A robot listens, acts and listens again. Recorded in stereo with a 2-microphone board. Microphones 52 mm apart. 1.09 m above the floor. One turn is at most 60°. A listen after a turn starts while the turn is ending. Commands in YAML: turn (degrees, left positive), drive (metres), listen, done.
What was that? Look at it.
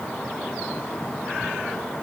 listen: true
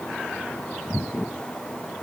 listen: true
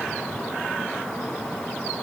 done: "I can't make out anything."